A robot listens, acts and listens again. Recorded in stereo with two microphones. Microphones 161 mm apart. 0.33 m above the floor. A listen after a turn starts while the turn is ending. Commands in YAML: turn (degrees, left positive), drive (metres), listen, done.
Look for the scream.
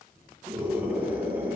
turn: -30
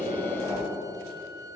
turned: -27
turn: 15
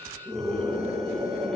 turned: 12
done: "Facing the scream, over 4 m away."